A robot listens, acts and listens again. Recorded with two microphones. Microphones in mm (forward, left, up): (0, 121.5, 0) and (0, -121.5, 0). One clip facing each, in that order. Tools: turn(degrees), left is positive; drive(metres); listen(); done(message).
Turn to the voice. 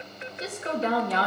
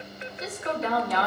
turn(degrees=30)
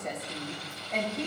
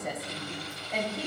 done("Facing the woman speaking, 1 to 2 m away.")